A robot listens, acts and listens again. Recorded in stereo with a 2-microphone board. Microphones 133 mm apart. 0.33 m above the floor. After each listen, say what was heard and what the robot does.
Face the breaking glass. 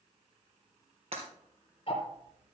The breaking glass: about 50° right or 130° right. Turn 50° right.
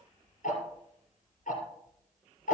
Keep listening.
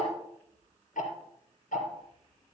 I heard breaking glass, but can't make it out now. It was about straight ahead or 80° right.